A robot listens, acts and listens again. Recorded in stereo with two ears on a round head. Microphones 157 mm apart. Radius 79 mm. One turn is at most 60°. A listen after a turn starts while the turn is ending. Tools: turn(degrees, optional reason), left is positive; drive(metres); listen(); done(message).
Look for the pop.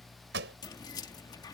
turn(degrees=-60, reason="The pop: about 65° right or 115° right.")
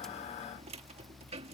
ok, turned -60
listen()
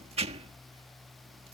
done("I heard a pop, but can't make it out now. It was about 5° right or 55° right.")